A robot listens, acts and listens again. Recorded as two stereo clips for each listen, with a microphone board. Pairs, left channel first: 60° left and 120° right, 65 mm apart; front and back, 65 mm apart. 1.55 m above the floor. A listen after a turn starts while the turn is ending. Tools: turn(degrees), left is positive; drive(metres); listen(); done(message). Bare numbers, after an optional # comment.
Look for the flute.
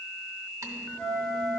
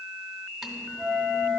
# The flute: 90° left.
turn(90)
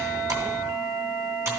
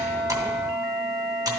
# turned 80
# The flute is now 10° left.
turn(10)
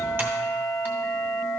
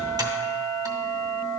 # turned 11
done("Facing the flute.")